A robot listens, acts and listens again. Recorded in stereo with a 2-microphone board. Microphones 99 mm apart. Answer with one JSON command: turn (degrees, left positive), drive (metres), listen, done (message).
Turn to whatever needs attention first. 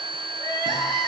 {"turn": 35}
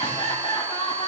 {"turn": 105}
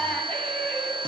{"turn": 15}
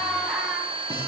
{"done": "Facing the crying."}